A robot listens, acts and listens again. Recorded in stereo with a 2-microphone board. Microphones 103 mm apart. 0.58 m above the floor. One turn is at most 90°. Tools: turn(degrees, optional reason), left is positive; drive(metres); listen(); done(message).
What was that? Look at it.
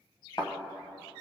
turn(degrees=45, reason="The thud: about 45° left or 135° left.")
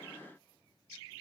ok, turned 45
listen()
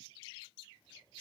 done("I heard a thud, but can't make it out now. It was about straight ahead or 90° left.")